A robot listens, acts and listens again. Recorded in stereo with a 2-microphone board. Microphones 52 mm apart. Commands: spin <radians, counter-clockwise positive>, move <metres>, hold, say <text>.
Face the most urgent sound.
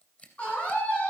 spin 0.44
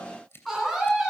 say Found it: a scream, straight ahead, over 4 m away.